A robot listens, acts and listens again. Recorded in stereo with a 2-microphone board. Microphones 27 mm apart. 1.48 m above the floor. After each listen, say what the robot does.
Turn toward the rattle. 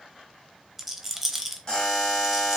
Turn 30° right.
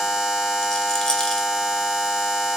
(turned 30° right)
Keep listening.
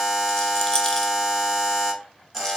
Keep listening.
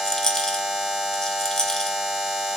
Turn 25° left.
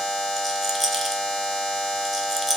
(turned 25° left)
Found it: a rattle, straight ahead.